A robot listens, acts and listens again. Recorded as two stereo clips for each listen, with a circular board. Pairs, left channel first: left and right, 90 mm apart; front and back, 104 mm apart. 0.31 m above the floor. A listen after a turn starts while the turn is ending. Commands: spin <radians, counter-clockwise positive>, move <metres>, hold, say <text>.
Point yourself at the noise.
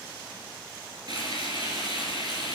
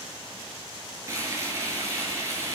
spin -2.09
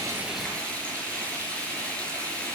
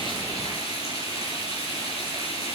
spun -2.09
spin 0.26
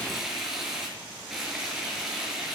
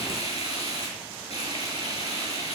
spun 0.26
say Facing the frying, over 4 m away.